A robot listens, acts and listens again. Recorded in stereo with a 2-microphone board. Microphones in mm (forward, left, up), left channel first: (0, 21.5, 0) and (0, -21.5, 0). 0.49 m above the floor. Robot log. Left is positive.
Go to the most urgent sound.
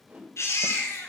cmd yaw +90
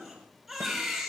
cmd fwd 1.0
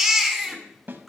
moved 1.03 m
cmd fwd 1.0
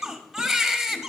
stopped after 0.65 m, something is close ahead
note: The baby crying is now 10° right.
cmd yaw -10
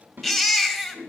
end: I am next to the baby crying.